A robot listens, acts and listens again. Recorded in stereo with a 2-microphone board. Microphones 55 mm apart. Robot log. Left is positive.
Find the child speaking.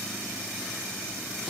cmd idle
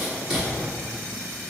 cmd idle
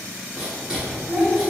cmd yaw -30
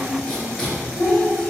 note: So it is at 10° left.
cmd yaw +10
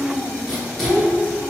end: Found it: a child speaking, straight ahead, 2 to 4 m away.